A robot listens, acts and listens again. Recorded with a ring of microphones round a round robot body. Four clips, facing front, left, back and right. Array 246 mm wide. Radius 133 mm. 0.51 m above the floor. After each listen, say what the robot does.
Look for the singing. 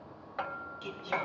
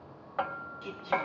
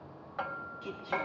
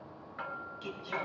Turn 40° right.
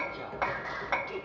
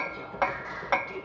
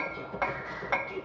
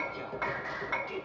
Turn 25° right.
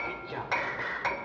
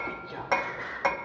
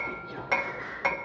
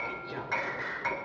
Found it: singing, straight ahead, 1 to 2 m away.